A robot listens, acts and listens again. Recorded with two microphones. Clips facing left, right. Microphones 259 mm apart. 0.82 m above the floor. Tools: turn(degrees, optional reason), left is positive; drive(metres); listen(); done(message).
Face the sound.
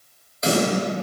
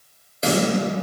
turn(degrees=-30, reason="The snare drum: about 30° right or 150° right.")
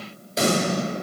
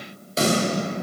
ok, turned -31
done("Found it: a snare drum, straight ahead.")